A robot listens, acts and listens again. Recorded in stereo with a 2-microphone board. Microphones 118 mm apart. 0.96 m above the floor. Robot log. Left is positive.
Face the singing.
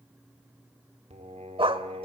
cmd yaw -90
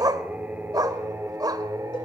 note: So it is at 30° right.
cmd yaw -30
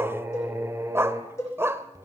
note: The singing is now 30° right.
cmd yaw -30
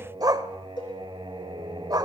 note: The singing is now 45° right.
cmd yaw -45
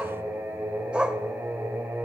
note: The singing is now 15° right.
cmd yaw -15
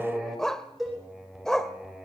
end: Found it: singing, straight ahead.